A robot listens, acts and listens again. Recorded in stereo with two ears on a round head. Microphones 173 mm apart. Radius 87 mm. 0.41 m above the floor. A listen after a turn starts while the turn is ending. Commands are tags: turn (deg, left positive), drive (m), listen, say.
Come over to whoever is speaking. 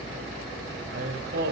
<turn deg="-65"/>
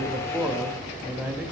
<turn deg="-10"/>
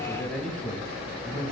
<drive m="1.0"/>
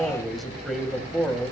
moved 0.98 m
<drive m="1.0"/>
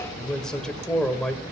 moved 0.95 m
<drive m="1.0"/>
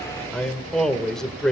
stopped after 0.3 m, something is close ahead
<say>Arrived at the man speaking, straight ahead.</say>